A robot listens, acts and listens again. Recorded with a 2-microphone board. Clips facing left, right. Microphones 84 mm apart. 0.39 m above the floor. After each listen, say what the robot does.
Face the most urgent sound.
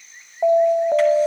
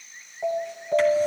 Turn 50° left.
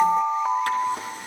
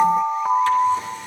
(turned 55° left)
Facing the alarm.